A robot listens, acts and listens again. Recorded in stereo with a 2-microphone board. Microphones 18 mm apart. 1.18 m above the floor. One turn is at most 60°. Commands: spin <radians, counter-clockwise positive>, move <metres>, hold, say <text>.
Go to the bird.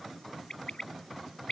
spin 1.05
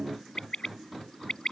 spin 0.96
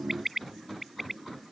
spin -0.17
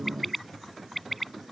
move 1.0
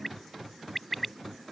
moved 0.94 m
move 1.0
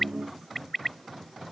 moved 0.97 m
move 1.0
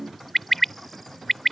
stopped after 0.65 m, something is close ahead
spin 0.17
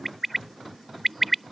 say Arrived at the bird, straight ahead.